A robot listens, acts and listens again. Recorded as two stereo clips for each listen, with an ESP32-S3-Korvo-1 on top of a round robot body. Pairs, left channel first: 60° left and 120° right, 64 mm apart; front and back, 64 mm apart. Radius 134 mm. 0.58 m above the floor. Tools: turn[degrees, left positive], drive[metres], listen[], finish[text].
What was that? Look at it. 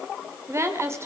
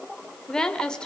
Thought: The woman speaking: 75° right.
Action: turn[-75]
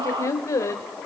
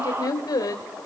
Thought: The woman speaking is now 20° left.
Action: turn[20]
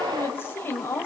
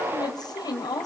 Action: finish[Found it: a woman speaking, straight ahead.]